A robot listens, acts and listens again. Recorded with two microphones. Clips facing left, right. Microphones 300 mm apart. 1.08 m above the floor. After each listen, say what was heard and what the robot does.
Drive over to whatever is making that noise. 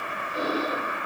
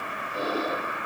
The breathing: about 75° left or 105° left. Turn 75° left.
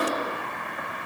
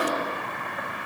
So it is at 25° left. Turn 25° left.
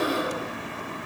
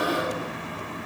The breathing is now 25° left. Turn 25° left.
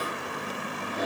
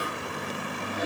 Drive 1.0 m forward.
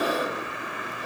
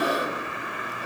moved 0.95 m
Drive 1.0 m forward.
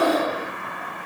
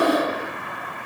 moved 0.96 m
Drive 1.0 m forward.
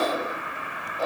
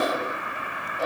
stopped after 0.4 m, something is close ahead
I am next to the breathing.